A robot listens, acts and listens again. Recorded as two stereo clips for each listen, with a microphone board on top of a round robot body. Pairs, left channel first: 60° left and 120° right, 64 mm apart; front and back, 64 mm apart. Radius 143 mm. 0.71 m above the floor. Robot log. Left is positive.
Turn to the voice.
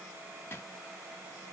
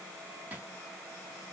cmd idle
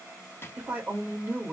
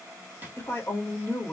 note: The woman speaking: 55° right.
cmd yaw -55
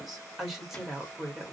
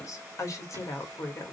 note: The woman speaking is now 35° right.
cmd yaw -35
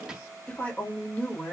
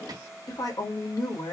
end: Found it: a woman speaking, straight ahead.